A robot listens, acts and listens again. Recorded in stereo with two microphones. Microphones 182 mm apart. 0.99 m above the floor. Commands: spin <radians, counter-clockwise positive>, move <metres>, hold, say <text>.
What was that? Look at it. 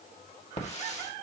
spin 0.70
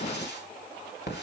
spin 1.75
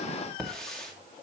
say Found it: a hiss, straight ahead, 2 to 4 m away.